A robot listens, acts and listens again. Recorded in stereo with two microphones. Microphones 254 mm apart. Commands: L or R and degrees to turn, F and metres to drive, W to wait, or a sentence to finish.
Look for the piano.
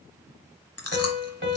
R45
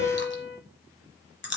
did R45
R75
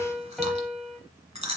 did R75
Facing the piano.